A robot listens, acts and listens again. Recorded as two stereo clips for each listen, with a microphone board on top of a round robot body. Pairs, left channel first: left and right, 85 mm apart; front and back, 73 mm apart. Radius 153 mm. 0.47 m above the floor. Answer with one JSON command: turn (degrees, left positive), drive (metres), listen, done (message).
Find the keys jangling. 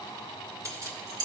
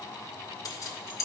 {"turn": -50}
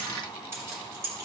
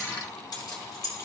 {"turn": -35}
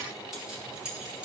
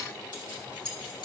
{"turn": -10}
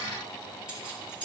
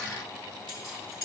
{"turn": -10}
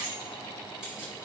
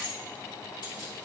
{"done": "Found it: keys jangling, straight ahead, 2 to 4 m away."}